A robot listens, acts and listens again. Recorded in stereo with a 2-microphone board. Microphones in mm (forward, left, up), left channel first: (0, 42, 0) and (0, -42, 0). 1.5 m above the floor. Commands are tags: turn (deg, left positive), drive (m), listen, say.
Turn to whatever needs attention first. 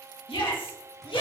<turn deg="90"/>
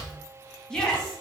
<turn deg="10"/>
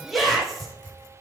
<say>Found it: a shout, straight ahead, 2 to 4 m away.</say>